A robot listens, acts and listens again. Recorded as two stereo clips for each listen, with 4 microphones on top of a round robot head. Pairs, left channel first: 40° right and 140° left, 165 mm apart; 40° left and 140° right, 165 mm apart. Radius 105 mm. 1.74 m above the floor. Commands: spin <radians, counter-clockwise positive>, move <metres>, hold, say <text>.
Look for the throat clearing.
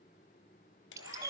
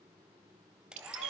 hold
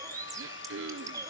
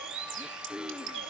spin 2.36
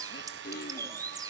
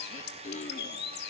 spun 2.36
spin -0.17
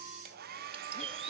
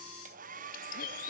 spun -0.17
hold
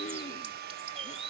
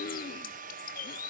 say Found it: throat clearing, straight ahead, under 1 m away.